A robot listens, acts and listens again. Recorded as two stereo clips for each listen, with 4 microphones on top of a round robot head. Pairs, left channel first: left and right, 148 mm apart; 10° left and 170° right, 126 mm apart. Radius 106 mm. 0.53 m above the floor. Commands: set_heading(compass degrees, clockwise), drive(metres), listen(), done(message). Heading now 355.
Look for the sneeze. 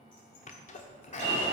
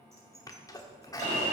set_heading(290)
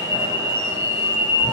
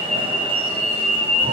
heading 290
done("I heard a sneeze from this way, but can't make it out now.")